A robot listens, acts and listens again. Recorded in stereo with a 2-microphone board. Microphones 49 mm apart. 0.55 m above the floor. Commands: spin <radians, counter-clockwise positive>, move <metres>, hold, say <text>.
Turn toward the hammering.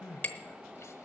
spin 0.61
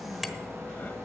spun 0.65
say Found it: hammering, straight ahead, 1 to 2 m away.